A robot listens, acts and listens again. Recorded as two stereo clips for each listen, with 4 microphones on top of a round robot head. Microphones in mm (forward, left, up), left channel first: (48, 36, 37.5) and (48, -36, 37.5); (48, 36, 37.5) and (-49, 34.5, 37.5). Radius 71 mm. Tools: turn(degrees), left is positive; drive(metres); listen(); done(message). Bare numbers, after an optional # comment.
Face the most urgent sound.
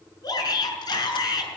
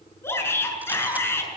# The shout: 65° left.
turn(65)
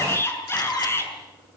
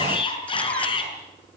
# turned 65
# The shout is now 35° left.
turn(35)
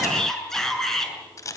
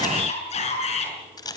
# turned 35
done("Facing the shout, over 4 m away.")